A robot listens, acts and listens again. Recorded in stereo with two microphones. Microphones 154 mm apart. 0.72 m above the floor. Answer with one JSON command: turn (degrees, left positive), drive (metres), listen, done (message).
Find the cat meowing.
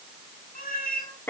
{"turn": 65}
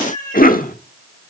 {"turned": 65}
{"turn": 50}
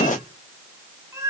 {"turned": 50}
{"turn": -20}
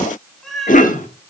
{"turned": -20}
{"done": "Facing the cat meowing."}